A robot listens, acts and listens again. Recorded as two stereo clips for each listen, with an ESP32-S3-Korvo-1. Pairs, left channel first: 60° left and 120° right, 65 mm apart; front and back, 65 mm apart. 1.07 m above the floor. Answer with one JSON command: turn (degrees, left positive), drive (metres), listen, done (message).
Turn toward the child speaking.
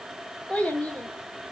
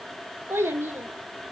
{"turn": 130}
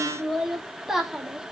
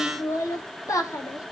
{"turn": -40}
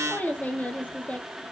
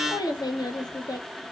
{"turn": -10}
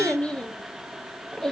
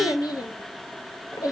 {"turn": -20}
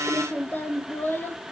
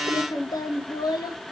{"done": "Facing the child speaking, 1 to 2 m away."}